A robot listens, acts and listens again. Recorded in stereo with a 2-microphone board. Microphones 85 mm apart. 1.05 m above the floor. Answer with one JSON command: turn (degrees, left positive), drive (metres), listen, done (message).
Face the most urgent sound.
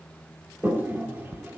{"listen": true}
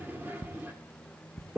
{"listen": true}
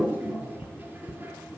{"done": "I can't make out anything urgent, only ticking and a toilet flushing."}